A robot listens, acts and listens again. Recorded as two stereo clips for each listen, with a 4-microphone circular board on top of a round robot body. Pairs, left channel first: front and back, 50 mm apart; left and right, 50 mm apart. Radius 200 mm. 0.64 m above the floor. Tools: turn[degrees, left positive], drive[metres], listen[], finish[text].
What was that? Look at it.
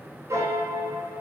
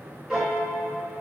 Thought: The piano: 165° right.
Action: turn[-165]
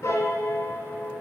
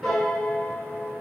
Action: finish[Found it: a piano, straight ahead.]